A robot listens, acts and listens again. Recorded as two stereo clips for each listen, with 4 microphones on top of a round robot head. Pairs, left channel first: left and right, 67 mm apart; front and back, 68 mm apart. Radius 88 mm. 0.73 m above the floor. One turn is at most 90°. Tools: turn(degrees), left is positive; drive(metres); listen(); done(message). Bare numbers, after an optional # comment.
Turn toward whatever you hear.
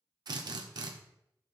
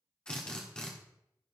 # The drill: 80° right.
turn(-80)
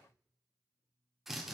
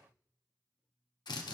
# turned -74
done("Facing the drill.")